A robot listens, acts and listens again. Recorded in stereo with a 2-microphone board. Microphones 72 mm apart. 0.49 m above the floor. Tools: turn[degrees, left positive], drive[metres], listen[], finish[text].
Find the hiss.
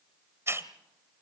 Thought: The hiss: about 40° right or 140° right.
Action: turn[-40]
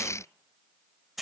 Action: finish[Facing the hiss.]